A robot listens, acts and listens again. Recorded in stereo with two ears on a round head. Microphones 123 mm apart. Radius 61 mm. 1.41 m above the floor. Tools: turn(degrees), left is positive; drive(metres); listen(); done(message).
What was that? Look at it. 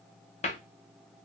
turn(degrees=45)
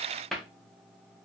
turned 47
done("Found it: a cupboard door, straight ahead.")